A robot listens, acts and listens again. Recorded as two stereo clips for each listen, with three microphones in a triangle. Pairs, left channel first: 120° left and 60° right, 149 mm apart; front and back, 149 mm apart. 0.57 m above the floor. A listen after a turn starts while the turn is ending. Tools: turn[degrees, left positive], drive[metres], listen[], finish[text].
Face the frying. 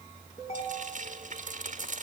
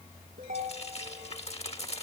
Thought: The frying: 40° right.
Action: turn[-40]
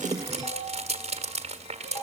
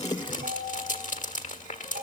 Thought: The frying is now 20° right.
Action: turn[-20]
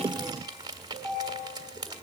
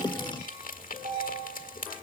Action: finish[Found it: frying, straight ahead, 1 to 2 m away.]